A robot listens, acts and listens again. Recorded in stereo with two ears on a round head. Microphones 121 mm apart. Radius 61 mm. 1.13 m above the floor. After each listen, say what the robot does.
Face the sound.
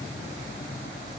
Keep listening.
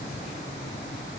Keep listening.
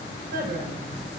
Turn 90° right.
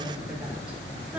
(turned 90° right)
Turn 10° right.
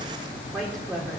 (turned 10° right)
Found it: a woman speaking, straight ahead.